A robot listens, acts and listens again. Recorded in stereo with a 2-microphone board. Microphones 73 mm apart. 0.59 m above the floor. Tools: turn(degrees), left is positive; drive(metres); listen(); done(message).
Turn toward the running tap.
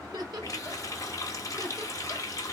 turn(degrees=50)
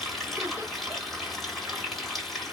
done("Facing the running tap, 1 to 2 m away.")